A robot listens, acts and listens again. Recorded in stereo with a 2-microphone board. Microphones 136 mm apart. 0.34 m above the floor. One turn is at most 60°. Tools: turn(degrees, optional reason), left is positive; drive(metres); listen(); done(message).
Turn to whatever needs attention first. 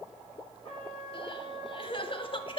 turn(degrees=40, reason="The crying: about 40° left or 140° left.")
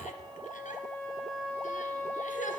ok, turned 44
turn(degrees=60, reason="So it is at 95° left.")
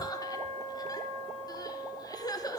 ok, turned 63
turn(degrees=30, reason="The crying is now 30° left.")
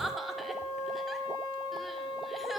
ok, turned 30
done("Found it: crying, straight ahead.")